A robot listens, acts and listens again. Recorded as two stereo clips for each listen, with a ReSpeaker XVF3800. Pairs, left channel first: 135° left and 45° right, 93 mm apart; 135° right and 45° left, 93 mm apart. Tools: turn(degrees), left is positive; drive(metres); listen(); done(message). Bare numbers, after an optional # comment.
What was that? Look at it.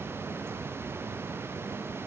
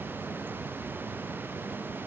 listen()
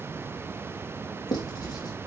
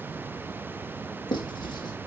# The writing: 175° right.
turn(-175)
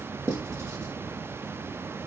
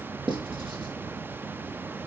# The writing is now 15° left.
turn(15)
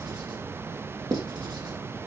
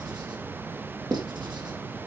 done("Found it: writing, straight ahead, over 4 m away.")